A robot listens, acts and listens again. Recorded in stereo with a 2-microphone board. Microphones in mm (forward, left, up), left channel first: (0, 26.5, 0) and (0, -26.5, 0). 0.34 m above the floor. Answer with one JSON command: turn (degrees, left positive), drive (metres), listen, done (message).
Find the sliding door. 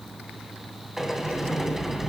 {"turn": -30}
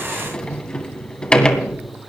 {"turn": 20}
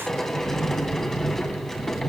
{"done": "Facing the sliding door, 2 to 4 m away."}